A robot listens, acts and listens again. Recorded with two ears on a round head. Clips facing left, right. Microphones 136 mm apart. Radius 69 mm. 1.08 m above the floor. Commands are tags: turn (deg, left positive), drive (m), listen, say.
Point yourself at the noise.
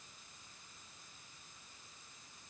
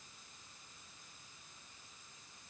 <listen/>
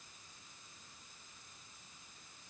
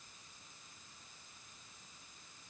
<listen/>
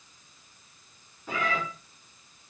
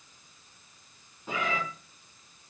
<turn deg="-15"/>
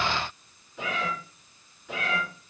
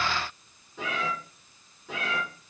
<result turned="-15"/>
<turn deg="-30"/>
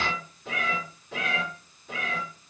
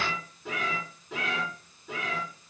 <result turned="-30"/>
<turn deg="-125"/>
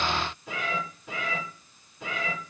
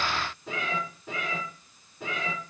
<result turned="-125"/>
<turn deg="-25"/>
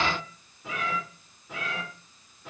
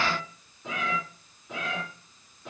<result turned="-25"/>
<say>Found it: a cat meowing, straight ahead, 2 to 4 m away.</say>